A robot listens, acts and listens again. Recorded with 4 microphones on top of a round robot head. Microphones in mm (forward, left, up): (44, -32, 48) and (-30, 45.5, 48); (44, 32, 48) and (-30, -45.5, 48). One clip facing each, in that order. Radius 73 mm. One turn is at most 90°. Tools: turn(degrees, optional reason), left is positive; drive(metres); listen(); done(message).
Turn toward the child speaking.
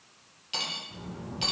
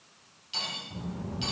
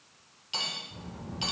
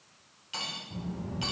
turn(degrees=-90, reason="The child speaking: 165° right.")
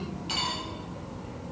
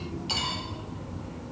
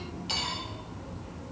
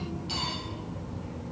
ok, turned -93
turn(degrees=-90, reason="The child speaking is now 110° right.")
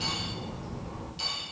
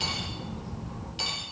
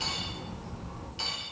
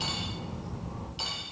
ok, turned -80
turn(degrees=-75, reason="The child speaking is now 75° right.")
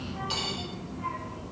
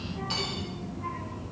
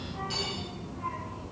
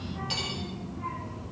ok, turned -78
turn(degrees=-20, reason="The child speaking is now 20° right.")
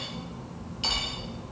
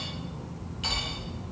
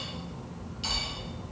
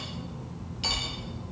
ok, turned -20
done("Facing the child speaking.")